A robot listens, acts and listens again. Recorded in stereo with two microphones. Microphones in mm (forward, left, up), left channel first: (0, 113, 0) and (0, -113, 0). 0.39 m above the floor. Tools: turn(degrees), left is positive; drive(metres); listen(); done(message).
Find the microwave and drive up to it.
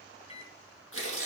turn(degrees=30)
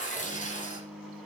drive(metres=1.0)
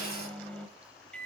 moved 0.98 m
drive(metres=1.0)
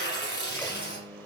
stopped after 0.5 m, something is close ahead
turn(degrees=10)
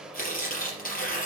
done("Arrived at the microwave, straight ahead.")